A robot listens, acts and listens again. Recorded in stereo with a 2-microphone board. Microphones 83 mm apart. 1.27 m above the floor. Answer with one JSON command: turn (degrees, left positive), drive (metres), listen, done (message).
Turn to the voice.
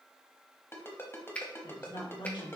{"turn": 90}
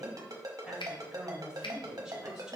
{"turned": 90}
{"turn": -10}
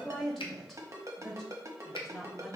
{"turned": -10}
{"done": "Facing the woman speaking, 1 to 2 m away."}